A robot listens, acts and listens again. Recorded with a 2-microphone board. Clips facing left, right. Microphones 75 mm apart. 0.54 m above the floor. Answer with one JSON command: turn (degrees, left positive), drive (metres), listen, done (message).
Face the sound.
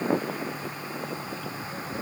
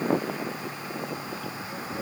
{"listen": true}
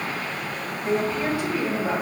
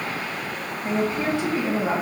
{"turn": -25}
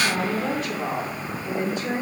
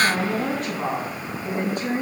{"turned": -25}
{"turn": -125}
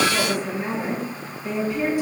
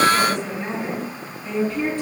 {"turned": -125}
{"turn": 10}
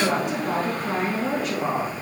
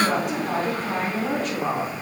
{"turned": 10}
{"done": "Found it: a woman speaking, straight ahead."}